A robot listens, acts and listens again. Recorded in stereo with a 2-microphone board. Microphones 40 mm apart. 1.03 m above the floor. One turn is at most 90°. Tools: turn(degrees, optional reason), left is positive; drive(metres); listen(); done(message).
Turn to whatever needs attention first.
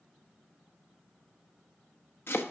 listen()
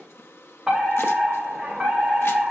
turn(degrees=-30)
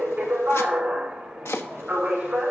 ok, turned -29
turn(degrees=-90, reason="So it is at 145° right.")
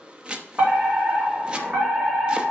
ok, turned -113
turn(degrees=-35, reason="The fire alarm is now 35° right.")
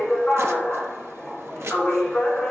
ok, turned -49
turn(degrees=15, reason="The fire alarm is now 15° left.")
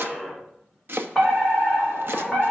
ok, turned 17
done("Facing the fire alarm.")